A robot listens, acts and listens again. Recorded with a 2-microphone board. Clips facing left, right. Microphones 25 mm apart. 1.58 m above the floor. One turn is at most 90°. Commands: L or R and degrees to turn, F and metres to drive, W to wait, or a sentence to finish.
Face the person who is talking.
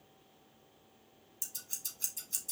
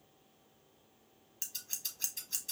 W
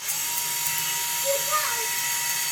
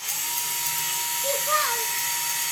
R35
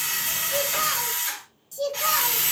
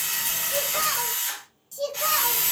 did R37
Facing the child speaking, 1 to 2 m away.